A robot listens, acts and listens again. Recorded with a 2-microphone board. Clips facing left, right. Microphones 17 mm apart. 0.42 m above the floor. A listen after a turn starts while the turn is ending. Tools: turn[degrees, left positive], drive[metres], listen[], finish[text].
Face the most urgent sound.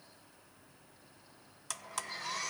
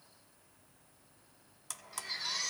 Thought: The baby crying: about 70° right or 110° right.
Action: turn[-70]
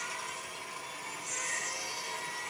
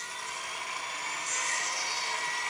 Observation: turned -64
Thought: So it is at 45° right.
Action: turn[-45]
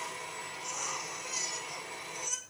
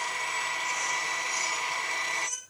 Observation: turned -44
Action: finish[Facing the baby crying.]